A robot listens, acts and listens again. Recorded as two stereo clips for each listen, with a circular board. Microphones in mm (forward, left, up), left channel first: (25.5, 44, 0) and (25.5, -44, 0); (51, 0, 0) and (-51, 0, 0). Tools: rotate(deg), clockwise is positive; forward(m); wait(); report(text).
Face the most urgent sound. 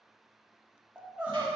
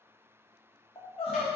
rotate(15)
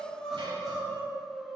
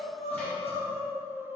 report("Facing the crying.")